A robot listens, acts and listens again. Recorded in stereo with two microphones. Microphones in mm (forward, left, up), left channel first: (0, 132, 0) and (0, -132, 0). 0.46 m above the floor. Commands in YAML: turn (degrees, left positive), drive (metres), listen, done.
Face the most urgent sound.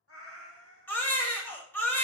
turn: 30
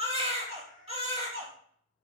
turn: -25
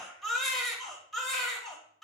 done: "Facing the baby crying, under 1 m away."